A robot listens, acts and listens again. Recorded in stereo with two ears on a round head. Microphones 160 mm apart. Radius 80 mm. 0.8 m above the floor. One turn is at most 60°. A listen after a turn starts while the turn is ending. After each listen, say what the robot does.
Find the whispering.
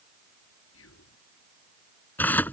Turn 60° left.
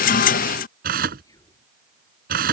Turn 20° left.
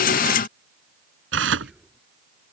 Facing the whispering.